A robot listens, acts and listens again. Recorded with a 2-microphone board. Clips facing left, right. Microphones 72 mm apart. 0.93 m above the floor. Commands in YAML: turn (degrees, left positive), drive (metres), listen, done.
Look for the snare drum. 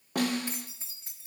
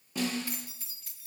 turn: 60
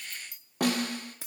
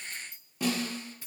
turn: 60
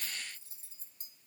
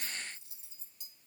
listen: true
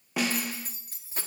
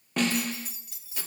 done: "Facing the snare drum."